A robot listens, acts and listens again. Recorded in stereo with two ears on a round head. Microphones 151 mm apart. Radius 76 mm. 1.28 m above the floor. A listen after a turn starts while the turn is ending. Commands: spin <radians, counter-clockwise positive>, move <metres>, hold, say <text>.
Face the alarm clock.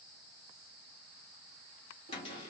hold
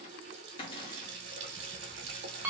spin -0.52
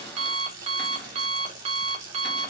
spin -2.44
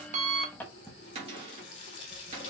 spin 0.17
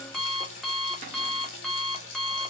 say Facing the alarm clock, under 1 m away.